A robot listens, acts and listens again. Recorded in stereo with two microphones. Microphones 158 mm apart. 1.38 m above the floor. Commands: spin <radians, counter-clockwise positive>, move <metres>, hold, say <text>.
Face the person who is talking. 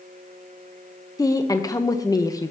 spin 0.35
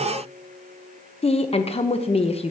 spin 2.36
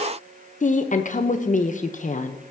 spin 1.05
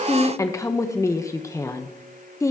spin 0.35
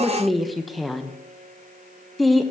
say Facing the woman speaking, under 1 m away.